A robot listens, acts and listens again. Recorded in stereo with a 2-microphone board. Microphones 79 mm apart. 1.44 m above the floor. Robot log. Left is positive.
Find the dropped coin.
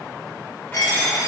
note: The dropped coin: about 50° left or 130° left.
cmd yaw +50
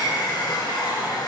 cmd idle
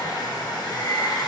end: I heard a dropped coin, but can't make it out now. It was about straight ahead or 80° left.